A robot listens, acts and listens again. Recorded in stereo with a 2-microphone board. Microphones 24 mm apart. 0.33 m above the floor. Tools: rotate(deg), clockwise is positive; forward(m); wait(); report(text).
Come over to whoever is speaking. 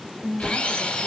rotate(40)
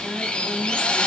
wait()
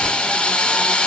wait()
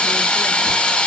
report("I heard a woman speaking, but can't make it out now. It was about straight ahead or 100° right. I did not reach it.")